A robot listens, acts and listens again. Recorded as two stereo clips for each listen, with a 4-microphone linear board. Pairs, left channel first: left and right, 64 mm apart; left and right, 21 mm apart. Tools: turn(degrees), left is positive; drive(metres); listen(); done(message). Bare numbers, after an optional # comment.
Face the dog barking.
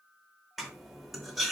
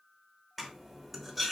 listen()
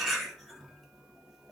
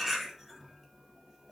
listen()
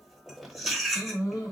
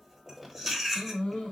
turn(90)
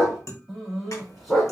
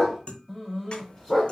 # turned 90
done("Found it: a dog barking, straight ahead, 1 to 2 m away.")